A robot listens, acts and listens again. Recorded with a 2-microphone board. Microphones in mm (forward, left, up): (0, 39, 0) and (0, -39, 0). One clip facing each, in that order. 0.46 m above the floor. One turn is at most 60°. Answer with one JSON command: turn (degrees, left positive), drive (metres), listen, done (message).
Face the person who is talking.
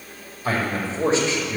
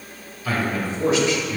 {"turn": 30}
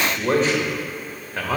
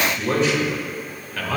{"turn": 25}
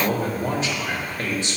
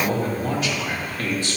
{"turn": 25}
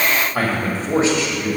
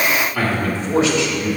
{"turn": 30}
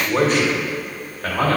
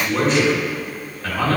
{"turn": 60}
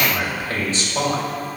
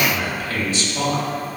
{"turn": 30}
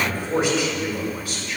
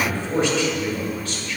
{"turn": 10}
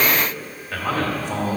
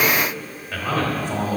{"done": "Found it: a man speaking, straight ahead, 1 to 2 m away."}